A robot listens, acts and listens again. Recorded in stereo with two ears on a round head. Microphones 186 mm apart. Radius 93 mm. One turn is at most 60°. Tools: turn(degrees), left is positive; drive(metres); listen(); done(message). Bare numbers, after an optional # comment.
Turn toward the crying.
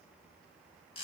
listen()
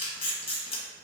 listen()
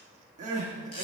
# The crying: about 35° right or 145° right.
turn(-35)
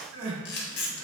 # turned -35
# So it is at 110° right.
turn(-60)
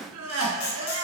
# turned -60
# The crying is now 70° right.
turn(-60)
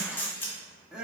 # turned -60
done("Facing the crying.")